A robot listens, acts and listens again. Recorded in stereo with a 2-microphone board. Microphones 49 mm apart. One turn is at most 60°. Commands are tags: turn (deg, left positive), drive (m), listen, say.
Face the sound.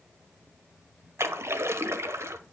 <turn deg="-60"/>
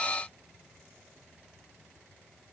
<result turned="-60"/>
<listen/>
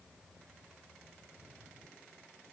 <say>I heard a splash, but can't make it out now. It was about 5° right or 55° right.</say>